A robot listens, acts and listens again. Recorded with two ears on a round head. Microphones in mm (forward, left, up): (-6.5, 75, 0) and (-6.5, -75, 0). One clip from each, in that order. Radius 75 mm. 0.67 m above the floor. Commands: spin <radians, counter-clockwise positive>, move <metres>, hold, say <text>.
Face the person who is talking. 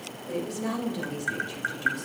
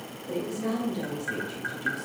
spin 0.52
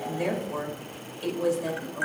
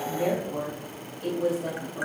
spin 2.09
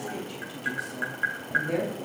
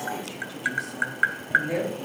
say Facing the woman speaking.